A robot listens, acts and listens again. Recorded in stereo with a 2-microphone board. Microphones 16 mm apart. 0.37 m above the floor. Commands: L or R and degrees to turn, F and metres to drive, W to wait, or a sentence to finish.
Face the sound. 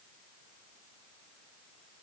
W
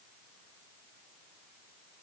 W
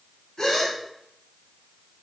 L50
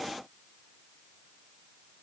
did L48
W
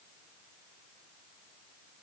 I heard a gasp, but can't make it out now. It was about 5° left or 80° left.